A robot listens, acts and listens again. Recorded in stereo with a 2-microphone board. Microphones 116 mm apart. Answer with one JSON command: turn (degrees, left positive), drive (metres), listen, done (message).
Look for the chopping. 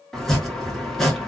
{"turn": 30}
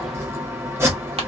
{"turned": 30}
{"turn": -25}
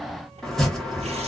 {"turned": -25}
{"done": "Found it: chopping, straight ahead, under 1 m away."}